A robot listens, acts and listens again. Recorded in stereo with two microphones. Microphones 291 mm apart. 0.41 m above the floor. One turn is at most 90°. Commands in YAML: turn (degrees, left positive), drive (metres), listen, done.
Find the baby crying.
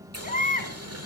turn: 30
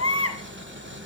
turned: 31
turn: 90
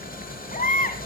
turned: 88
turn: 30
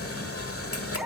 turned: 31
done: "Facing the baby crying, 1 to 2 m away."